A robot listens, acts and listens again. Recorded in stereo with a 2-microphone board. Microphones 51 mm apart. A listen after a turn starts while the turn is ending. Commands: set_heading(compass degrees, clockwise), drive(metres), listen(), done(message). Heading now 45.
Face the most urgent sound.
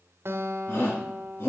set_heading(5)
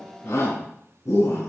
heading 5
set_heading(265)
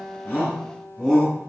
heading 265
set_heading(250)
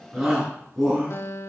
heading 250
done("Found it: a shout, straight ahead.")